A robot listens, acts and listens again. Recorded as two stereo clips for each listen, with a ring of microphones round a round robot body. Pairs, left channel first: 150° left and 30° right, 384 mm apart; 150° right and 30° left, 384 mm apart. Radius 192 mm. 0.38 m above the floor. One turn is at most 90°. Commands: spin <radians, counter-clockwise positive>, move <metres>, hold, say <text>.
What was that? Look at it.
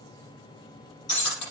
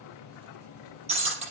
spin 1.57
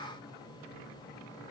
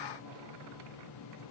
spin 0.26
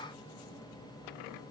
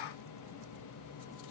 say I heard breaking glass from this way, but can't make it out now.